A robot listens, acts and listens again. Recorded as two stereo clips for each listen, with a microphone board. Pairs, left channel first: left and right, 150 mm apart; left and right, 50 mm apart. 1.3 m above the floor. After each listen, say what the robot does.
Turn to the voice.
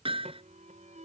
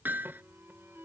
Keep listening.
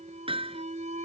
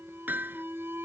Keep listening.
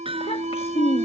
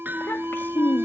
Turn 40° left.
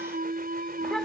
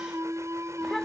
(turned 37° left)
Keep listening.
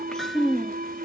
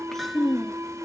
Found it: a child speaking, straight ahead.